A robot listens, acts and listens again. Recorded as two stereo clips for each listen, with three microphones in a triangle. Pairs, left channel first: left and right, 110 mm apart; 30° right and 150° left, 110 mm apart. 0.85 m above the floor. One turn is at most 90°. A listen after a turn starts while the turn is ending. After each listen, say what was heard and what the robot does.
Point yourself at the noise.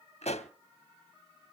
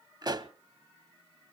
The pop: 100° left. Turn 90° left.
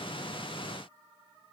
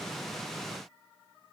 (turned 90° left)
Nothing new. It was at 10° left. Turn 10° left.
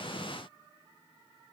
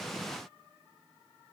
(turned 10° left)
Facing where the pop came from. I can't hear it now.